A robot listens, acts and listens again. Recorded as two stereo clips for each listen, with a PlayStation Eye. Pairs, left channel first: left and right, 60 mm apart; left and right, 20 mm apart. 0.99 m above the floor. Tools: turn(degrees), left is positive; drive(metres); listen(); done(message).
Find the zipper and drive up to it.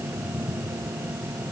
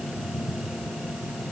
listen()
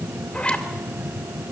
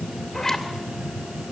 turn(degrees=25)
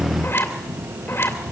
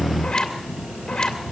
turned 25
turn(degrees=130)
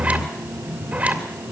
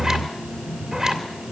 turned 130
turn(degrees=-30)
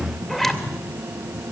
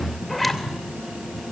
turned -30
drive(metres=1.0)
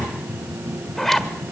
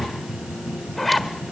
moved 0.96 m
drive(metres=1.0)
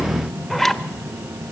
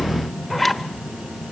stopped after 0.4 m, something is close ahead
done("Arrived at the zipper, straight ahead.")